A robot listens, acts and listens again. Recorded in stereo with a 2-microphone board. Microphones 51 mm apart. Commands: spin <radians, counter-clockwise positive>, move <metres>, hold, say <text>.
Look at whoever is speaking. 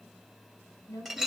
spin 1.57
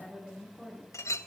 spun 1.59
spin -0.26
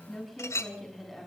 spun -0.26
say Found it: a woman speaking, straight ahead.